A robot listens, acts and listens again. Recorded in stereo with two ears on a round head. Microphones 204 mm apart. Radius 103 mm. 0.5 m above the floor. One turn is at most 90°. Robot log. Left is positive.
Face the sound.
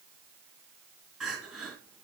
cmd yaw +30
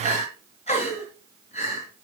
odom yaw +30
note: So it is at 150° left.
cmd yaw +90
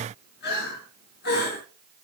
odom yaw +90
note: The crying is now 45° left.
cmd yaw +45
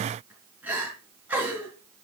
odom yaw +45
note: The crying is now 10° right.
cmd yaw -10
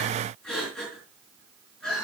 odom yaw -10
end: Found it: crying, straight ahead.